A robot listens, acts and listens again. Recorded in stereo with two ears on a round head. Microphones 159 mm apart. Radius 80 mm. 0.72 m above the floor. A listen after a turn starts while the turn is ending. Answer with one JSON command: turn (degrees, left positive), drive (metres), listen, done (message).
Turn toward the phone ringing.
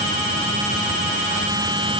{"listen": true}
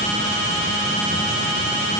{"listen": true}
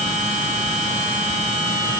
{"done": "I can't make out a phone ringing."}